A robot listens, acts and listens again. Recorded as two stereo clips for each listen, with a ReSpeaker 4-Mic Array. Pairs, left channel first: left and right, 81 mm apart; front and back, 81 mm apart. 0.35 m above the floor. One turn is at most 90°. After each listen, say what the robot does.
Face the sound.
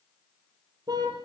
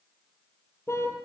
Turn 55° right.
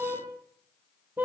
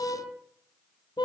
Turn 25° right.
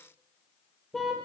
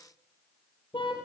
Facing the car horn, over 4 m away.